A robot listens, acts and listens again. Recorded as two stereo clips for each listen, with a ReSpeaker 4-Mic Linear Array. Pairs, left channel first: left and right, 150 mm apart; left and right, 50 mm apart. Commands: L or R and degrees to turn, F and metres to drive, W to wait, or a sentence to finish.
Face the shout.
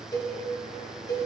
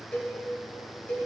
W
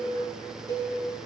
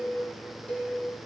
W
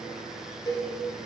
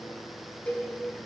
I can't make out a shout to turn to.